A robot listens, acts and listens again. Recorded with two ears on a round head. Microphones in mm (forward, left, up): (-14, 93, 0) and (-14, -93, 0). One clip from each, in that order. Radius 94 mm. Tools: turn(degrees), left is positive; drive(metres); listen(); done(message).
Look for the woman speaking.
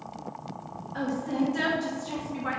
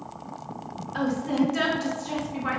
turn(degrees=-30)
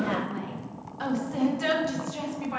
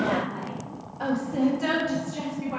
turn(degrees=65)
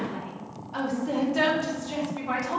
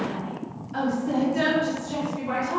turn(degrees=20)
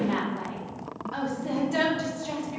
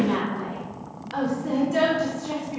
done("Facing the woman speaking.")